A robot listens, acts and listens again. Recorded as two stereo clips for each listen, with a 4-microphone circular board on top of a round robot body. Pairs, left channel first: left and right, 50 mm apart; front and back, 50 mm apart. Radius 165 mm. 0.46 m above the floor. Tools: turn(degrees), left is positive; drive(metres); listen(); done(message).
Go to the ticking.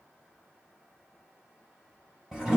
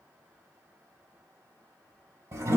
listen()
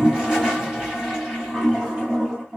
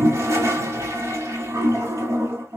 listen()
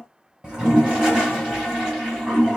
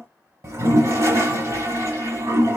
done("I can't make out ticking, only a toilet flushing.")